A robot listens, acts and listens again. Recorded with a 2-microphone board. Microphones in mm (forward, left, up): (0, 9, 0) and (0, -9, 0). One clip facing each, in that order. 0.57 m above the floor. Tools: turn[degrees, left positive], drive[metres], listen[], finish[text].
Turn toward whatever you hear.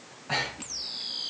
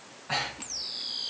Action: turn[30]
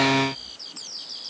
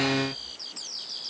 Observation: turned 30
Action: listen[]
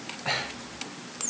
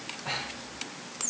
Thought: So it is at 145° left.
Action: turn[145]
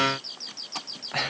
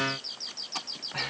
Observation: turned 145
Thought: The breathing is now 50° left.
Action: turn[50]
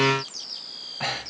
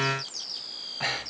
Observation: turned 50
Action: finish[Facing the breathing.]